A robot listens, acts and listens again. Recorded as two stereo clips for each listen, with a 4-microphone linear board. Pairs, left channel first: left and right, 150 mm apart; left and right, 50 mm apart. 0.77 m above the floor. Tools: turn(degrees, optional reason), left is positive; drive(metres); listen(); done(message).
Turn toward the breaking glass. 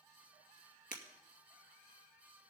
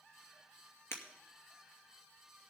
turn(degrees=55, reason="The breaking glass: about 55° left or 125° left.")
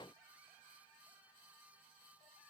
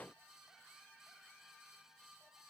listen()
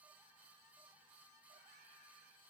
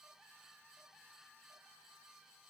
done("I heard breaking glass, but can't make it out now. It was about straight ahead or 70° left.")